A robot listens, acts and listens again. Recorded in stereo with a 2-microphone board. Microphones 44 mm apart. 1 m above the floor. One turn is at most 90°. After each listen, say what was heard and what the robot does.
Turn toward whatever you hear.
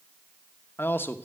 The man speaking: about 55° left or 125° left. Turn 55° left.
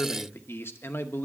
So it is at 65° left. Turn 65° left.
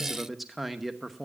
Found it: a man speaking, straight ahead.